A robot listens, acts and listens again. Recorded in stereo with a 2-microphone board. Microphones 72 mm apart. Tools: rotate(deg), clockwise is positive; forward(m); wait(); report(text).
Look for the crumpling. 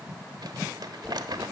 rotate(70)
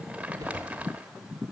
rotate(20)
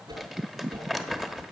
report("Facing the crumpling.")